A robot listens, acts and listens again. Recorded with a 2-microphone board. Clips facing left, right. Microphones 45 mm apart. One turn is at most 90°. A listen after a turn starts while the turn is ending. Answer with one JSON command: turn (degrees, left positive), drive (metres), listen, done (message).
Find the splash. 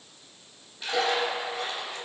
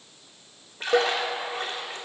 {"turn": -45}
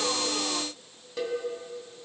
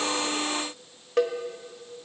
{"listen": true}
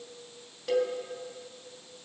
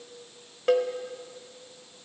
{"done": "I heard a splash, but can't make it out now. It was about straight ahead or 90° right."}